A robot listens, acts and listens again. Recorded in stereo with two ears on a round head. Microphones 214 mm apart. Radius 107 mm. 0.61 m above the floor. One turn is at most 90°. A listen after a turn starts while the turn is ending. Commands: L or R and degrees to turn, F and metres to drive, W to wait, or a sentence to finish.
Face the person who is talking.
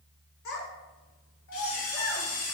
L65
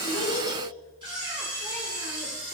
W
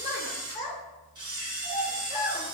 L35
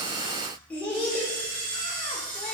Facing the child speaking, 1 to 2 m away.